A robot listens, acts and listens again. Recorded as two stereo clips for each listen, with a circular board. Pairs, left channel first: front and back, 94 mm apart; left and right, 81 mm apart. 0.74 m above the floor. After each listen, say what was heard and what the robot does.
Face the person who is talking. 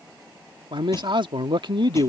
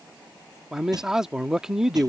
The man speaking: 170° right. Turn 170° right.
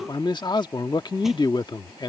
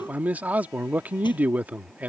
The man speaking is now 25° right. Turn 25° right.
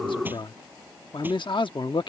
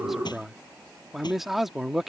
Facing the man speaking.